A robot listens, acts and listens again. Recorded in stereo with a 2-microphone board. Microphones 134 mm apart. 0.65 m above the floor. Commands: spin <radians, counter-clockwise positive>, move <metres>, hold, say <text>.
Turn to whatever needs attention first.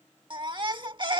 spin -0.61
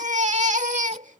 spin -1.92
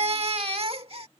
spin -0.79
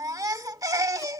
spin -0.44
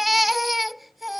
say Facing the baby crying.